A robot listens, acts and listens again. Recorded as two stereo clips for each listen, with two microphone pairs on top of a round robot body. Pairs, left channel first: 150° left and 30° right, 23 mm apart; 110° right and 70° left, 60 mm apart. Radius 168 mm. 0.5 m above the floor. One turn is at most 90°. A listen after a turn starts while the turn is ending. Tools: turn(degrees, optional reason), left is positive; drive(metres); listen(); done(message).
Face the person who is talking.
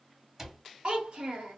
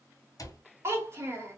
turn(degrees=20, reason="The child speaking: 20° left.")
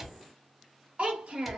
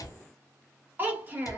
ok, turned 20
turn(degrees=10, reason="The child speaking is now 10° left.")
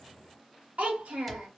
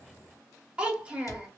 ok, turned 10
done("Found it: a child speaking, straight ahead.")